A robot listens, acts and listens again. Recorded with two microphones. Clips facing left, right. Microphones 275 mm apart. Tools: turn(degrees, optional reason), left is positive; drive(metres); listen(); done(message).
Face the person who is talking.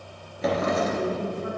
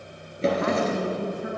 turn(degrees=-90)
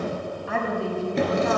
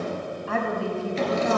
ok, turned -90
done("Found it: a woman speaking, straight ahead, 2 to 4 m away.")